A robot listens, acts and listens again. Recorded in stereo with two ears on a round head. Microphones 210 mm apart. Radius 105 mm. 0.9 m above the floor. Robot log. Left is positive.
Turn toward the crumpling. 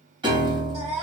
cmd idle
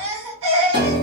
cmd idle
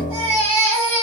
end: I can't make out crumpling, only a piano and a baby crying.